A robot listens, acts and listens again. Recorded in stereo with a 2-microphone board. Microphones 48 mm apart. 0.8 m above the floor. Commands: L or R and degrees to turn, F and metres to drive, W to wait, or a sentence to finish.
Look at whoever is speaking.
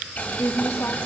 L70
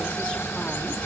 W
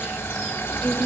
L25
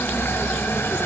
W
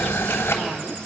W
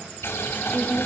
L20
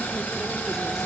W
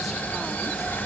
W
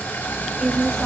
Found it: a woman speaking, straight ahead.